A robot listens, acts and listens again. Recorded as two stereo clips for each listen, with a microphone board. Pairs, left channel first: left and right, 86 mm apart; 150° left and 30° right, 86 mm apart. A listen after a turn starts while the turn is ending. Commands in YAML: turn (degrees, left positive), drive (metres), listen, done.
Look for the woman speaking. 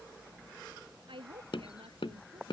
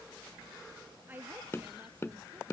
turn: -100
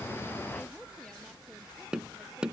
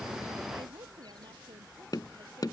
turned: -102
listen: true
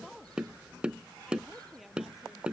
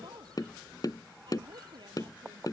done: "Facing the woman speaking."